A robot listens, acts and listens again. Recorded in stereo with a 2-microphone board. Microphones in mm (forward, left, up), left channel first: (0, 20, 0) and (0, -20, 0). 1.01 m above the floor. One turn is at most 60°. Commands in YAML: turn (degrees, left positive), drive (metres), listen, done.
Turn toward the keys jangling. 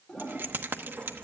turn: -60
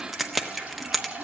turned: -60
done: "Found it: keys jangling, straight ahead."